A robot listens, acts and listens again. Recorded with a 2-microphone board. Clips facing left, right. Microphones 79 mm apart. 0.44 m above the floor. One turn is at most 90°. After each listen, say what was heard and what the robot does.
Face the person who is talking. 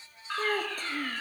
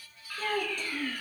The child speaking: about 40° left or 140° left. Turn 40° left.
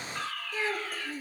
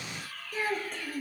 Facing the child speaking, over 4 m away.